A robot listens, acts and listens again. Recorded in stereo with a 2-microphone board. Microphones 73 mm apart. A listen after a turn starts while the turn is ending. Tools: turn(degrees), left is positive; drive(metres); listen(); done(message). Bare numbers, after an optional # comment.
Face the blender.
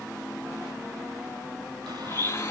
# The blender: about 35° left or 145° left.
turn(35)
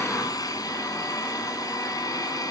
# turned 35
# So it is at 105° left.
turn(105)
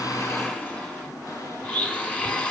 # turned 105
# The blender is now 20° left.
turn(20)
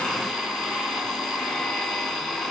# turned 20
done("Facing the blender, 2 to 4 m away.")